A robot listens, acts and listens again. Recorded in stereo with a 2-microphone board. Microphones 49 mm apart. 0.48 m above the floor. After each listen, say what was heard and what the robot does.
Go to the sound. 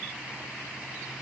Keep listening.
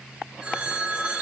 The phone ringing: about 20° right or 160° right. Turn 20° right.
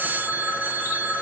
So it is at 140° right. Turn 140° right.
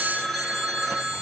Drive 1.0 m forward.
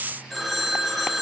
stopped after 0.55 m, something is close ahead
Something is in my way. I am facing the phone ringing but have not reached it.